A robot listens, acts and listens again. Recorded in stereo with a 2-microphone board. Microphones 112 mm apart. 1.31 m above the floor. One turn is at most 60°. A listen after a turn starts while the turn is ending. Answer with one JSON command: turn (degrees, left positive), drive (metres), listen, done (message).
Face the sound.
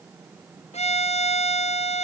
{"turn": 60}
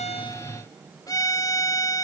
{"turn": 35}
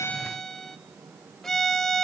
{"done": "Found it: a violin, straight ahead, 1 to 2 m away."}